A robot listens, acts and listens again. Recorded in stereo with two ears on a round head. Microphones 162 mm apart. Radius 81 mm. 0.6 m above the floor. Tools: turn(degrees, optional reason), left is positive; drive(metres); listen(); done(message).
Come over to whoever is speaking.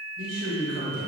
turn(degrees=-70, reason="The man speaking: about 70° right or 110° right.")
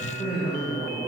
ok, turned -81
turn(degrees=-15, reason="So it is at 15° right.")
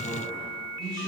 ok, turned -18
drive(metres=1.0)
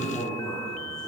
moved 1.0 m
drive(metres=1.0)
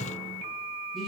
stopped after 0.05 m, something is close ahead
done("I am next to the man speaking.")